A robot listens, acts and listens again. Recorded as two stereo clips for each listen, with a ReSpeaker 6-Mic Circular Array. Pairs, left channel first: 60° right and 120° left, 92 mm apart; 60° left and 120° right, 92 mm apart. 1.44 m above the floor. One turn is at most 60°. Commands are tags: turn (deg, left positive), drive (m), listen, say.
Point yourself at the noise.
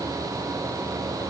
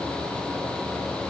<listen/>
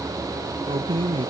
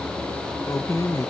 <turn deg="60"/>
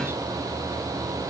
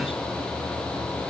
<turn deg="55"/>
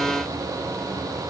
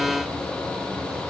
<listen/>
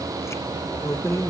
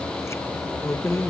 <say>Facing the keys jangling.</say>